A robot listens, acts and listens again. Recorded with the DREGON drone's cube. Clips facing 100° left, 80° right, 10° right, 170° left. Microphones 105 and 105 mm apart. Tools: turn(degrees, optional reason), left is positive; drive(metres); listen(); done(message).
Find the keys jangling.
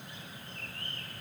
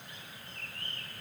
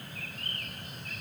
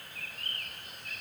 listen()
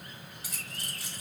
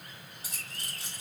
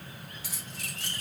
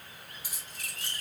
turn(degrees=-15, reason="The keys jangling: 15° right.")
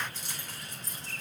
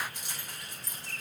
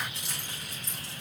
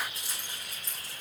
done("Found it: keys jangling, straight ahead.")